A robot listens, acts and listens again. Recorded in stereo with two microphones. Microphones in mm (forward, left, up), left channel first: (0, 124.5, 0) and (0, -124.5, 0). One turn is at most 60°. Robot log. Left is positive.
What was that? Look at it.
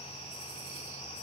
cmd idle
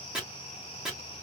cmd yaw -30
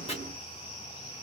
note: So it is at 25° left.
cmd yaw +25
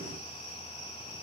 cmd idle
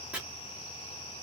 end: Found it: chopping, straight ahead, 2 to 4 m away.